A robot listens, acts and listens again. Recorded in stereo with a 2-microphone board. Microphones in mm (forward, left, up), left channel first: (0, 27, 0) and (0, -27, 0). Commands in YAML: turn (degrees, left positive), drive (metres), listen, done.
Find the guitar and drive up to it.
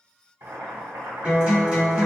turn: -15
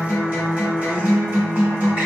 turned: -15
turn: -150
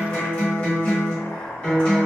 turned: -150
turn: 25
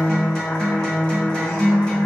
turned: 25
turn: 15
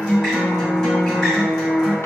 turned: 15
drive: 1.0
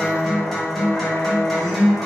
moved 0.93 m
drive: 1.0
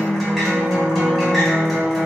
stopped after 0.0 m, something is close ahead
done: "Arrived at the guitar, straight ahead."